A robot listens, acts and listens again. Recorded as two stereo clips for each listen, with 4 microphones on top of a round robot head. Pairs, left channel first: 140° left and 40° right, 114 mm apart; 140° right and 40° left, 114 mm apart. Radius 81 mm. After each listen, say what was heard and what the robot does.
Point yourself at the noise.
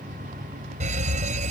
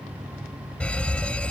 The fire alarm: 60° right. Turn 60° right.
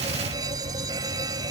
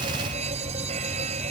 The fire alarm is now 15° left. Turn 15° left.
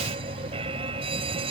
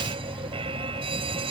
Found it: a fire alarm, straight ahead.